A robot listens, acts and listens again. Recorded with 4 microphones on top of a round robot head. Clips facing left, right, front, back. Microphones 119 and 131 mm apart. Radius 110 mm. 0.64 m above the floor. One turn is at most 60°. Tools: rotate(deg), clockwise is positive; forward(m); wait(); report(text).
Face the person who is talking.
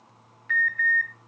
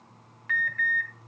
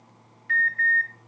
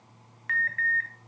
wait()
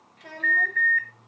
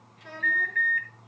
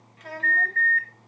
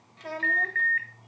rotate(-60)
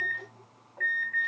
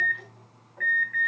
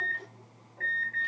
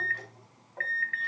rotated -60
rotate(-60)
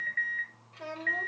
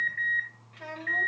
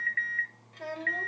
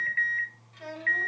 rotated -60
rotate(-35)
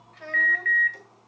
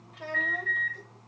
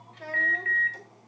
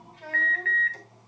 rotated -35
rotate(15)
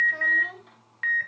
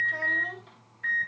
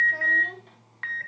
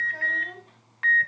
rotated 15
wait()
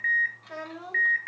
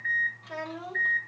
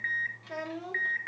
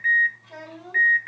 report("Facing the child speaking, 2 to 4 m away.")